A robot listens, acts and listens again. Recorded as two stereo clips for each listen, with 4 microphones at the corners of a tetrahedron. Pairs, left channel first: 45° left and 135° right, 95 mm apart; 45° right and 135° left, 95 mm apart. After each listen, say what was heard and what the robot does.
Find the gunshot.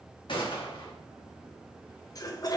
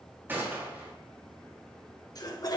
The gunshot: 65° left. Turn 65° left.
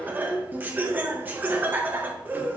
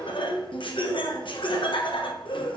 I heard a gunshot from this way, but can't make it out now.